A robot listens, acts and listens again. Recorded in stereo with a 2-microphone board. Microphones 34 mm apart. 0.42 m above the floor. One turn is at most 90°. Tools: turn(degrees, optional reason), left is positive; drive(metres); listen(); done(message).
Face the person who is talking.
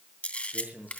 turn(degrees=-55, reason="The man speaking: about 55° right or 125° right.")
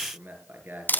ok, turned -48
turn(degrees=-80, reason="So it is at 80° right.")
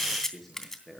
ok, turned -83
done("Found it: a man speaking, straight ahead, over 4 m away.")